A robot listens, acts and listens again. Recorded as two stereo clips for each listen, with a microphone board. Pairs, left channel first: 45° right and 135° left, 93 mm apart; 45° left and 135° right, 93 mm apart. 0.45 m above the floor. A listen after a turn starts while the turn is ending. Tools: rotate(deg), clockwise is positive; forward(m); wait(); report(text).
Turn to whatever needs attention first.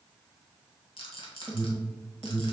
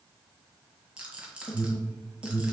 rotate(-35)
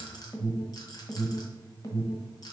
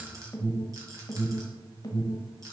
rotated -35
report("Facing the alarm.")